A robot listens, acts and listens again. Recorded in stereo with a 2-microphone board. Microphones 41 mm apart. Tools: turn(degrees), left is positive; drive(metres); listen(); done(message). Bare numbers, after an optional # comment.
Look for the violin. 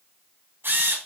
listen()
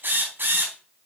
listen()
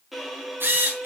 turn(-30)
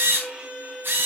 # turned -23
# So it is at 155° right.
turn(-155)
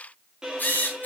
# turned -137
# The violin is now 15° right.
turn(-15)
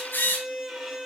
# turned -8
done("Found it: a violin, straight ahead, 2 to 4 m away.")